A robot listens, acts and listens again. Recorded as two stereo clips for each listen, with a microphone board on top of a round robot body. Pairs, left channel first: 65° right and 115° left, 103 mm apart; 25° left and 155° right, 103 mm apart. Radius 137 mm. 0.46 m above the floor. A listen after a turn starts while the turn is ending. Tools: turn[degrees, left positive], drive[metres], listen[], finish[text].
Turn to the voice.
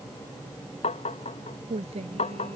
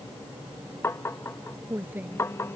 Thought: The woman speaking: 130° left.
Action: turn[130]
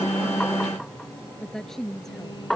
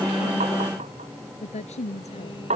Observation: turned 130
Thought: The woman speaking is now 20° left.
Action: turn[20]
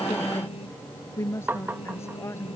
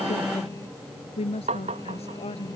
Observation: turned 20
Action: finish[Found it: a woman speaking, straight ahead.]